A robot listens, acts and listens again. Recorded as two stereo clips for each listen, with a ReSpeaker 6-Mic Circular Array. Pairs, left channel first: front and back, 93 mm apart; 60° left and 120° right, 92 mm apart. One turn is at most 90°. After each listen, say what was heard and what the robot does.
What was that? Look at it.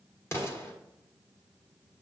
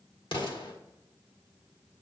The explosion: 55° left. Turn 55° left.
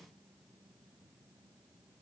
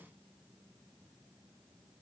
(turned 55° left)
I heard an explosion from this way, but can't make it out now.